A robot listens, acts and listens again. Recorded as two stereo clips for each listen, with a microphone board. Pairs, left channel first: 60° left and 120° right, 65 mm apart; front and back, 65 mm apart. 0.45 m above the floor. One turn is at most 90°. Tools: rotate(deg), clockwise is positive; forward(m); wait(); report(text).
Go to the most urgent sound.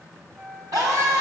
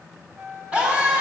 rotate(90)
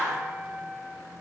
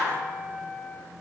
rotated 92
rotate(10)
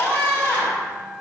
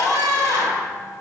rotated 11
forward(1.0)
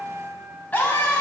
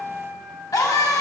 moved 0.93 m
forward(1.0)
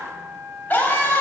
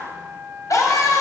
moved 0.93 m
forward(1.0)
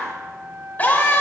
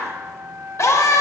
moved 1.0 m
forward(1.0)
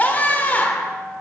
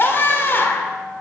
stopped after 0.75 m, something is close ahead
rotate(-15)
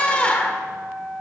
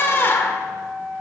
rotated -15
report("I am next to the scream.")